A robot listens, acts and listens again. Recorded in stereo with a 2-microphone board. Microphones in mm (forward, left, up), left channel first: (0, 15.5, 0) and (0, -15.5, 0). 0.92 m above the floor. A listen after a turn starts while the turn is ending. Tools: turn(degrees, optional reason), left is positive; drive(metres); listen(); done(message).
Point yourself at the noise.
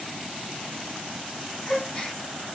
turn(degrees=35, reason="The gasp: about 35° left or 145° left.")
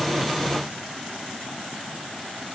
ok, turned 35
listen()
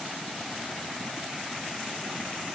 done("I heard a gasp, but can't make it out now. It was about straight ahead or 110° left.")